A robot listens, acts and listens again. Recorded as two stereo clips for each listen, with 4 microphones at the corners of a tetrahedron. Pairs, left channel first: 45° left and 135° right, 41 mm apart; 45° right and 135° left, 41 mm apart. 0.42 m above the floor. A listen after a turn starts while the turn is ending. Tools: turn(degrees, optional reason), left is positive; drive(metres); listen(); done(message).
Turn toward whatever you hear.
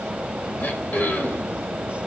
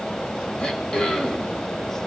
turn(degrees=15, reason="The throat clearing: 15° left.")
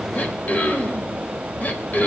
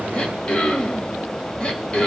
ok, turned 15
turn(degrees=10, reason="The throat clearing is now 10° left.")
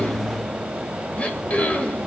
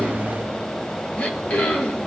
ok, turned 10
done("Found it: throat clearing, straight ahead.")